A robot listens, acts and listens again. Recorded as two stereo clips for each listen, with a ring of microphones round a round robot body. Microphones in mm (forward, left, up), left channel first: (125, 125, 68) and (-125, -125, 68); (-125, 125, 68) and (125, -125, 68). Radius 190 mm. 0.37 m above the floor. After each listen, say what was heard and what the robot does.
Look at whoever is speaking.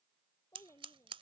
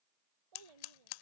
The child speaking: 40° right. Turn 40° right.
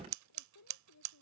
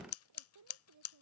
Facing the child speaking.